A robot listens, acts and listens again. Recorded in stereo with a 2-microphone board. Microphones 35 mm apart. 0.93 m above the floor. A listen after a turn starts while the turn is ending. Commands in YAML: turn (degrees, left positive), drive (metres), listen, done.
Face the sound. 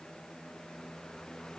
listen: true
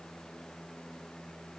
listen: true
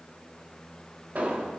turn: -50
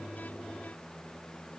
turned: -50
listen: true
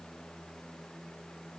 done: "I heard an explosion, but can't make it out now. It was about straight ahead or 80° right."